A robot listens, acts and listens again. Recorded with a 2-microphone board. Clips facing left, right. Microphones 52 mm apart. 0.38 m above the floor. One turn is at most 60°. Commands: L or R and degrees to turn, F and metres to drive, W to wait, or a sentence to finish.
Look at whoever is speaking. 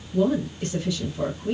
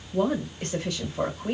R50
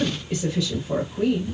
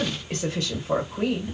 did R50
R60
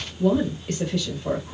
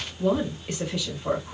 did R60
R20
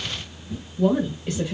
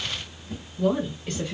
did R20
Found it: a woman speaking, straight ahead, 1 to 2 m away.